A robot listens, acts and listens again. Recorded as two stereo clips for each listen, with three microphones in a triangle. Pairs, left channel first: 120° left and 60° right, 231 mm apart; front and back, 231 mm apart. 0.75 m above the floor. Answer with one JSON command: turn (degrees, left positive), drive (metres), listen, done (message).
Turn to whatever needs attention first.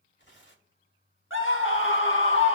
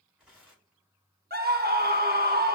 {"turn": 140}
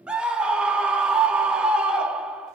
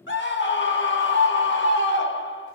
{"turn": 25}
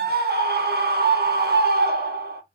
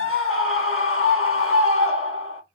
{"turn": -15}
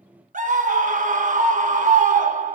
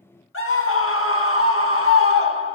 {"done": "Found it: a scream, straight ahead, 1 to 2 m away."}